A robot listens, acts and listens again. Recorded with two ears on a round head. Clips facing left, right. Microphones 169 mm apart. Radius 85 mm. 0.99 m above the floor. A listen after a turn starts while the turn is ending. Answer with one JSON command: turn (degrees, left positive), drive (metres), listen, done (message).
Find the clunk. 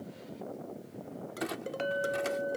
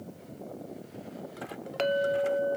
{"turn": 90}
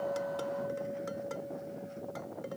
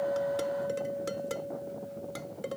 {"done": "I heard a clunk from this way, but can't make it out now."}